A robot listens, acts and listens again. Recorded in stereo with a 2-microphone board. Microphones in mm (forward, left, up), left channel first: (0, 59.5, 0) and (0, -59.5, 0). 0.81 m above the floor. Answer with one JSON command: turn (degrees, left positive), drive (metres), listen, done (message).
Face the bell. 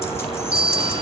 {"turn": 25}
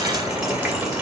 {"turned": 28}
{"listen": true}
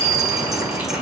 {"turn": 130}
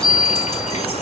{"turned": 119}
{"turn": 10}
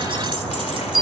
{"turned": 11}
{"done": "Found it: a bell, straight ahead, 2 to 4 m away."}